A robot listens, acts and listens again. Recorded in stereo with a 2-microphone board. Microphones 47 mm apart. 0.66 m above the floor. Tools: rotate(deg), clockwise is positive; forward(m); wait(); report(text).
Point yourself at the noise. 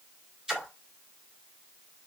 rotate(30)
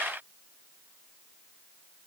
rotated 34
wait()
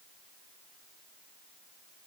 report("I heard a splash, but can't make it out now. It was about 20° left or 130° right.")